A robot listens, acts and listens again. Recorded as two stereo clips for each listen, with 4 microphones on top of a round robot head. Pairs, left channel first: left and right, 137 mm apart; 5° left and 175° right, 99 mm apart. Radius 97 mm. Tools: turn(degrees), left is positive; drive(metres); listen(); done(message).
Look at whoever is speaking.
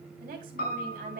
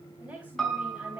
turn(degrees=-100)
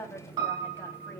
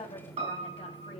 turn(degrees=15)
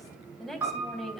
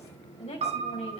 done("Found it: a woman speaking, straight ahead, 2 to 4 m away.")